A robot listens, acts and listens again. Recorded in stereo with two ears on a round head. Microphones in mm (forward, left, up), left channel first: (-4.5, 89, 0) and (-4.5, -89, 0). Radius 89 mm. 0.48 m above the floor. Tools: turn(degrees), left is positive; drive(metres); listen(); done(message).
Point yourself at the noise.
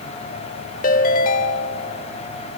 turn(degrees=45)
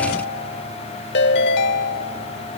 turn(degrees=75)
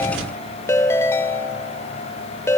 turn(degrees=15)
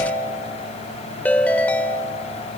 turn(degrees=10)
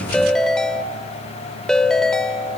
done("Facing the ringtone, 1 to 2 m away.")